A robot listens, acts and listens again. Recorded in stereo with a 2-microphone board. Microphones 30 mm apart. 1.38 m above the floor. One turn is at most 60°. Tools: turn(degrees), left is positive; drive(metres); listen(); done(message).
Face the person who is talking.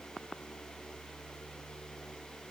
listen()
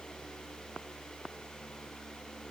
listen()
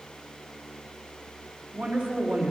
turn(degrees=-60)
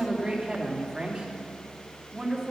turn(degrees=-20)
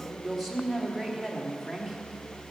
done("Facing the woman speaking.")